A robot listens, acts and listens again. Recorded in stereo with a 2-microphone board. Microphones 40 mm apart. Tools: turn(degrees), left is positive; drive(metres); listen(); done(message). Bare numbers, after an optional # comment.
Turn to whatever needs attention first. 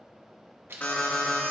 # The alarm: about 40° left or 140° left.
turn(40)
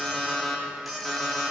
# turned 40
done("Found it: an alarm, straight ahead.")